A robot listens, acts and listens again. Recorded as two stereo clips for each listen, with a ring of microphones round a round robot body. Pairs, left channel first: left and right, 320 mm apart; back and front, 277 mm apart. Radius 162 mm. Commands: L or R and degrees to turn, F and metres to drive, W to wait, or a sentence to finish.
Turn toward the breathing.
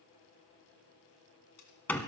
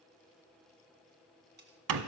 W
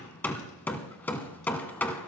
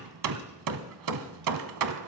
W
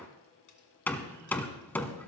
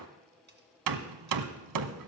I can't make out breathing, only hammering.